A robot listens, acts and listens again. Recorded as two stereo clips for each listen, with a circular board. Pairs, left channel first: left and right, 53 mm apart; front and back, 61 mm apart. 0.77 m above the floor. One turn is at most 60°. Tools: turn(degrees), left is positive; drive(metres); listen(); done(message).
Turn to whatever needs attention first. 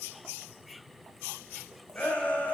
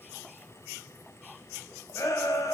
turn(degrees=30)
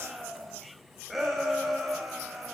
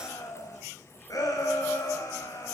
done("Facing the shout, over 4 m away.")